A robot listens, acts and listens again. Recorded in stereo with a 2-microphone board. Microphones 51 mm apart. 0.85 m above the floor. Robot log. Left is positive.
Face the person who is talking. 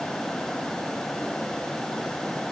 cmd idle
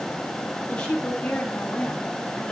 note: The woman speaking: about 15° left or 165° left.
cmd yaw +15
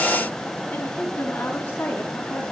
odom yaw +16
note: The woman speaking: about 30° left or 150° left.
cmd yaw +30
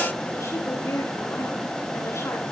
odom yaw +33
note: So it is at 120° left.
cmd yaw +120
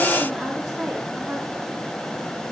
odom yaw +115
cmd idle
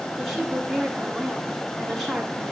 end: Found it: a woman speaking, straight ahead.